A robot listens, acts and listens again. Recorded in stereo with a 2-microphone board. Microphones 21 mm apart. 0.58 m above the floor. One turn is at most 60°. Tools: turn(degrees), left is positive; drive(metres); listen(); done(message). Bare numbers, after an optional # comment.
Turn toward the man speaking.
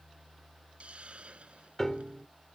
listen()
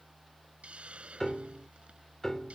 listen()
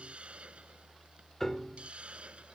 done("I can't make out a man speaking to turn to.")